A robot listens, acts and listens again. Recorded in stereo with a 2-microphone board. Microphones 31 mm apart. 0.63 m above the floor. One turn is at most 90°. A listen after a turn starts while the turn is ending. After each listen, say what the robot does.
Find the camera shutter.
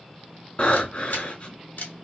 Turn 90° left.
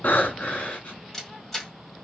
Turn 15° left.
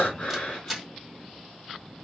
Found it: a camera shutter, straight ahead, 2 to 4 m away.